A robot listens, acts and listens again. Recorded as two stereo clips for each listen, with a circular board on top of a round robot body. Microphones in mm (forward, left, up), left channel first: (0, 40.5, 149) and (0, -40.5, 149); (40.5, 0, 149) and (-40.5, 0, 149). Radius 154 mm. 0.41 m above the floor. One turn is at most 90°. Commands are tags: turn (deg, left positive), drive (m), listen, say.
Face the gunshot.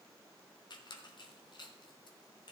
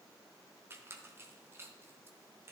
<listen/>
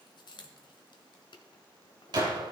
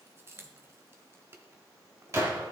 <turn deg="-90"/>
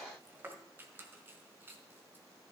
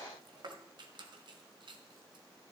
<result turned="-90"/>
<turn deg="-35"/>
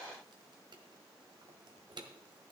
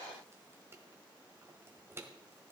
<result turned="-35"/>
<say>Facing where the gunshot came from. I can't hear it now.</say>